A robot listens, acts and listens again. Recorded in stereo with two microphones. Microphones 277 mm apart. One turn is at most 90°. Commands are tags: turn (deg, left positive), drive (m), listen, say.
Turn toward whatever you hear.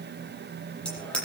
<turn deg="30"/>
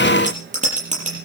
<turn deg="-25"/>
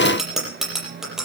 <say>Found it: a bicycle bell, straight ahead, over 4 m away.</say>